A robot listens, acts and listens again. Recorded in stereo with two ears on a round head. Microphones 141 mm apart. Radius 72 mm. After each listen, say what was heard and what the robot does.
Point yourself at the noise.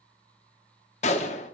The gunshot: about 45° left or 135° left. Turn 45° left.
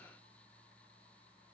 Keep listening.
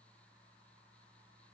I heard a gunshot, but can't make it out now. It was about straight ahead or 90° left.